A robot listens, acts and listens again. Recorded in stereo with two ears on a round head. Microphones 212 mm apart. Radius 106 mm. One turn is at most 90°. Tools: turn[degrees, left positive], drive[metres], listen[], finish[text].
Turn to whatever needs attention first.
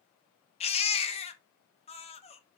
Thought: The baby crying: about 25° left or 155° left.
Action: turn[25]
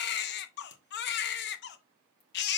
Thought: So it is at 125° left.
Action: turn[90]
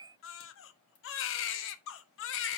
Thought: The baby crying is now 70° left.
Action: turn[70]
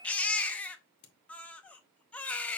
Action: finish[Facing the baby crying, under 1 m away.]